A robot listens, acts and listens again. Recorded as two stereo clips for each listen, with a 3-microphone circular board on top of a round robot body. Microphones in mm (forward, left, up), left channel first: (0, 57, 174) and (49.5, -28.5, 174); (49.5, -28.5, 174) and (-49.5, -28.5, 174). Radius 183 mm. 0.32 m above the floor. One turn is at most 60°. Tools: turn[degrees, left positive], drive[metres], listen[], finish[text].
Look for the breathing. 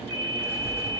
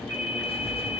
Action: listen[]
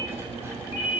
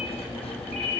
Action: listen[]
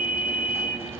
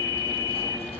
Action: finish[I can't make out breathing, only writing and a ringtone.]